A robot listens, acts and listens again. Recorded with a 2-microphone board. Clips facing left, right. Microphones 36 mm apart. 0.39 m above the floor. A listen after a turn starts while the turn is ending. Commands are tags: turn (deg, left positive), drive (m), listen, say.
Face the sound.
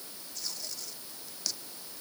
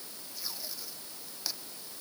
<turn deg="-30"/>
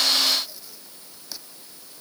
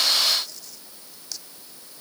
<turn deg="15"/>
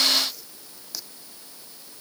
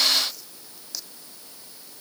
<say>Facing the tape being pulled.</say>